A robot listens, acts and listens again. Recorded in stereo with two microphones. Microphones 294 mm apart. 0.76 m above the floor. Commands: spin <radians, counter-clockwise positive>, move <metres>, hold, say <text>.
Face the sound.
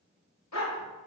spin 1.22
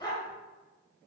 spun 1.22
spin 0.26
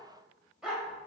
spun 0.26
say Facing the dog barking, 1 to 2 m away.